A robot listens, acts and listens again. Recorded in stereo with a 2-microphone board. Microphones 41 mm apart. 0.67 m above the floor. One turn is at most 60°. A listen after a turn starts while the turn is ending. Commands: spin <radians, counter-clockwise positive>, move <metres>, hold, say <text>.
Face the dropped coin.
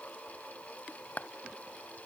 hold
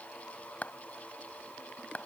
hold
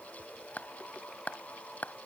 say I can't make out a dropped coin, only a clap.